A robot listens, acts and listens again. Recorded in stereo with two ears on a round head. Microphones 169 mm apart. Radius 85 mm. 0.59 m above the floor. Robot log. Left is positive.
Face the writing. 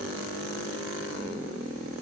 cmd idle
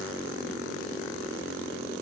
cmd idle
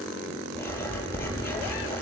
cmd yaw +30
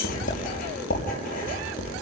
note: So it is at 135° left.
cmd yaw +135
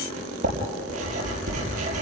note: The writing is now 40° right.
cmd yaw -40
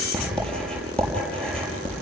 end: Facing the writing, over 4 m away.